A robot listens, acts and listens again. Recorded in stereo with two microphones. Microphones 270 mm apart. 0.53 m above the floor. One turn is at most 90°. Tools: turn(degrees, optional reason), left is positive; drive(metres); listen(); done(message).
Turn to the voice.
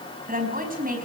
turn(degrees=-30, reason="The woman speaking: about 30° right or 150° right.")
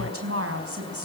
turn(degrees=-90, reason="So it is at 120° right.")
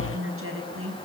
turn(degrees=-55, reason="The woman speaking is now 55° right.")
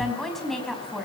done("Found it: a woman speaking, straight ahead, over 4 m away.")